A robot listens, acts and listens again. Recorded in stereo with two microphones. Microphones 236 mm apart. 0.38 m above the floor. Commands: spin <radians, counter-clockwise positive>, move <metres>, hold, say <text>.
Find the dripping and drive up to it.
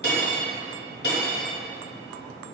hold
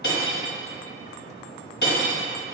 hold
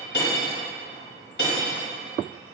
say I can't make out dripping, only cutlery clinking.